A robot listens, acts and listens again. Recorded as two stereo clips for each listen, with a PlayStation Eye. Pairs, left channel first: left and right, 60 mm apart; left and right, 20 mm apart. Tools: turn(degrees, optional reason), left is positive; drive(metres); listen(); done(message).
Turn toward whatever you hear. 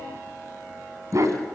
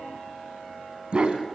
turn(degrees=-60, reason="The dog barking: about 60° right or 120° right.")
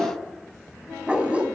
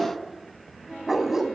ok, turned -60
turn(degrees=-20, reason="So it is at 20° right.")
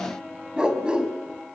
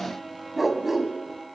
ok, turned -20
turn(degrees=-15, reason="The dog barking is now 15° right.")
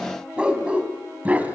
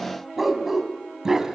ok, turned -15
turn(degrees=-25, reason="The dog barking is now 25° right.")
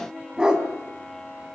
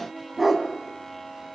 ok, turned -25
turn(degrees=-15, reason="The dog barking is now 15° right.")
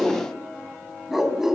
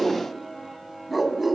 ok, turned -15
done("Found it: a dog barking, straight ahead, 2 to 4 m away.")